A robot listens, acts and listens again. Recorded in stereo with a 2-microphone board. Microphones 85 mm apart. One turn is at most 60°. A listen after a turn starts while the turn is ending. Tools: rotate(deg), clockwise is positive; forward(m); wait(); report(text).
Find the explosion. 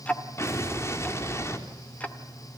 rotate(-35)
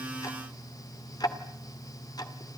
wait()
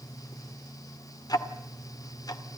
report("I heard an explosion, but can't make it out now. It was about straight ahead or 110° left.")